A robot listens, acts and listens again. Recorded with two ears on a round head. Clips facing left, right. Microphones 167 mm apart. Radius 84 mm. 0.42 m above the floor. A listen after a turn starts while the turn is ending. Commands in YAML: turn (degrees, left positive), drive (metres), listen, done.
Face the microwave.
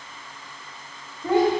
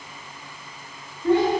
listen: true
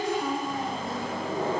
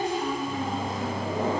turn: -15
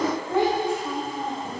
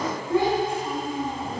listen: true
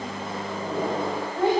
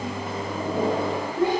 turn: -150
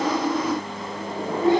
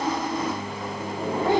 turn: 20
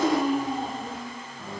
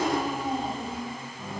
done: "Facing the microwave, 1 to 2 m away."